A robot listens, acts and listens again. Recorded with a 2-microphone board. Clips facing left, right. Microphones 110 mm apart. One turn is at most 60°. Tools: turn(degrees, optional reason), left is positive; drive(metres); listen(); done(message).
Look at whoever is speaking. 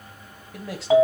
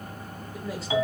turn(degrees=60)
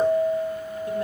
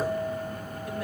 turn(degrees=30, reason="Nothing new. It was at 30° left.")
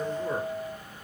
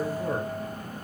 turn(degrees=-25, reason="The man speaking is now 25° right.")
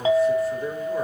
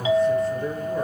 done("Facing the man speaking.")